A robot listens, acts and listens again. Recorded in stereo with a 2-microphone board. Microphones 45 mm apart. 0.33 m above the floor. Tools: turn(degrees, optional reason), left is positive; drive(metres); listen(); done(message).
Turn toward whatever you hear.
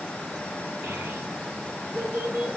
turn(degrees=-55, reason="The child speaking: about 55° right or 125° right.")
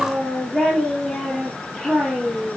done("Facing the child speaking.")